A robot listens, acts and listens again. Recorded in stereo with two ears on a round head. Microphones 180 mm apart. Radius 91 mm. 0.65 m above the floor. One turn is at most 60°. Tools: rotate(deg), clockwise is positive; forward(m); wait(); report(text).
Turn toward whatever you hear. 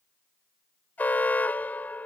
rotate(-30)
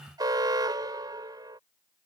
rotate(20)
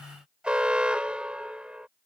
report("Found it: an alarm, straight ahead.")